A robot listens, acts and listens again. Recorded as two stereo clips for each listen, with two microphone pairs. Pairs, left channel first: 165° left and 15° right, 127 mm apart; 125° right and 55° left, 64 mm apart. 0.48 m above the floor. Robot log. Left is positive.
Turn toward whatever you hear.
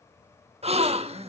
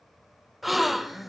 note: The gasp: 35° right.
cmd yaw -35
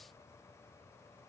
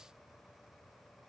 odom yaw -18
note: Nothing new. It was at 15° right.
cmd yaw -15
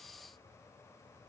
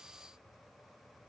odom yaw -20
end: Facing where the gasp came from. I can't hear it now.